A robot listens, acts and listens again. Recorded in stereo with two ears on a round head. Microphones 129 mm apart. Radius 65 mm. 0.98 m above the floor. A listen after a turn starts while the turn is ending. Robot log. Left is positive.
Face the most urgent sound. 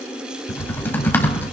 cmd idle
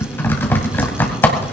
cmd idle
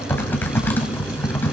end: I can't make out anything urgent to turn to.